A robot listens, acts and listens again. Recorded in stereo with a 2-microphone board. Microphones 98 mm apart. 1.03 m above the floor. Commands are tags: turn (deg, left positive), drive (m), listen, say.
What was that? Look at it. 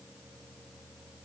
<listen/>
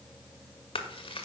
<turn deg="70"/>
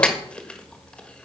<turn deg="10"/>
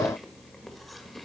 <listen/>
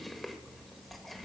<listen/>
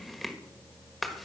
<say>Found it: chewing, straight ahead.</say>